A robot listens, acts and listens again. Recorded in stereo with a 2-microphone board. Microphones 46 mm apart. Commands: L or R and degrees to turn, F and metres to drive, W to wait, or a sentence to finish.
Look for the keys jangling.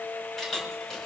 L30
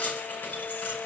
L140
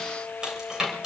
R20
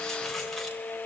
W
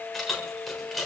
Found it: keys jangling, straight ahead, 2 to 4 m away.